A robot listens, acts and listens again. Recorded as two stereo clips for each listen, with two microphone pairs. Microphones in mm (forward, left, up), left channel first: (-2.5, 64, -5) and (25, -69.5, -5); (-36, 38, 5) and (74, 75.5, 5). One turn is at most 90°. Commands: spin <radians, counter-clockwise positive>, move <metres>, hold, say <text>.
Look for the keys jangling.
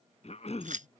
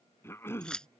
spin -1.40
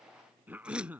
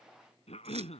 hold
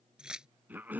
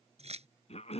say Found it: keys jangling, straight ahead.